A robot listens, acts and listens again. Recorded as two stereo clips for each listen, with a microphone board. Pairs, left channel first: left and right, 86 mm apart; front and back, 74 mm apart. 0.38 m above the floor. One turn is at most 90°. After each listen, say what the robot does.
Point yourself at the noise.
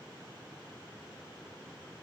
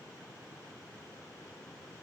Keep listening.
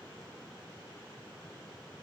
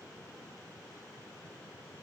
Keep listening.
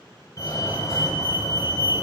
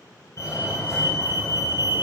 Turn 40° left.
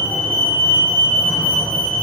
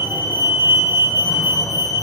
Turn 15° left.
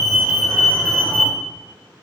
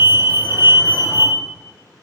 Found it: a fire alarm, straight ahead, over 4 m away.